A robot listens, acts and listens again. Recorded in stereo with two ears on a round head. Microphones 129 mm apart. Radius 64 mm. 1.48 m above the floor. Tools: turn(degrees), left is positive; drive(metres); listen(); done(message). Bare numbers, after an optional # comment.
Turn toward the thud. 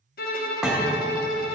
turn(-30)
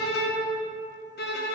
listen()
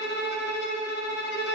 done("I heard a thud, but can't make it out now. It was about 25° left or 145° right.")